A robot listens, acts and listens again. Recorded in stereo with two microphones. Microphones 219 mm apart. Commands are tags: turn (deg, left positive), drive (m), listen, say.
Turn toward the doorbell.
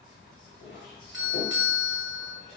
<turn deg="60"/>
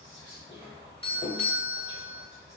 <turn deg="35"/>
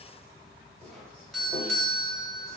<say>Found it: a doorbell, straight ahead, under 1 m away.</say>